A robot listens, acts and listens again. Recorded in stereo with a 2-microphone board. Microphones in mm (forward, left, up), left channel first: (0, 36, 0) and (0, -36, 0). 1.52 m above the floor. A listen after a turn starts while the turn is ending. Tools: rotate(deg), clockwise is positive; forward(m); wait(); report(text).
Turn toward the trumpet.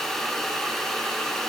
wait()
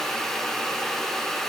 wait()
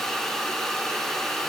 report("I can't make out a trumpet to turn to.")